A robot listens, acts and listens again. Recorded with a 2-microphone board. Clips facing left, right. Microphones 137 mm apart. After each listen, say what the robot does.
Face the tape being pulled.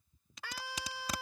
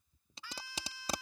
Turn 30° right.
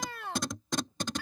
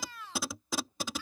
Found it: tape being pulled, straight ahead.